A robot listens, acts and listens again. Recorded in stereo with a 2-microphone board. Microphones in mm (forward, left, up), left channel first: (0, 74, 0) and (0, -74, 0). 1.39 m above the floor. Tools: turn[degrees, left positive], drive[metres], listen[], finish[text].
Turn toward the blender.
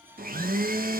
Action: turn[-90]
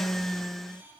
Action: finish[Facing the blender.]